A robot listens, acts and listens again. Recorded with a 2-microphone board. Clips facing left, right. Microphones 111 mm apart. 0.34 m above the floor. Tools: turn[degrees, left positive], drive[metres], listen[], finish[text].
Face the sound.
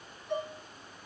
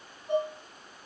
Thought: The dishes clattering: about 35° right or 145° right.
Action: turn[-35]
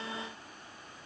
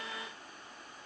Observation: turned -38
Action: listen[]
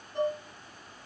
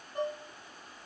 Action: finish[Found it: dishes clattering, straight ahead.]